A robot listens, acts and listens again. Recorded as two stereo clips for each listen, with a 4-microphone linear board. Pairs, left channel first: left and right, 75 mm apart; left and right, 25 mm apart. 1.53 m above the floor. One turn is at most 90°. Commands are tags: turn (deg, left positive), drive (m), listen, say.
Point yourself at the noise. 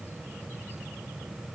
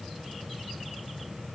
<listen/>
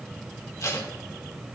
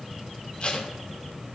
<turn deg="45"/>
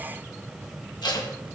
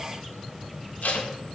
<turn deg="85"/>
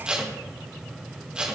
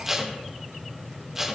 <turn deg="-15"/>
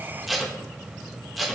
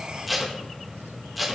<say>Found it: tape being pulled, straight ahead.</say>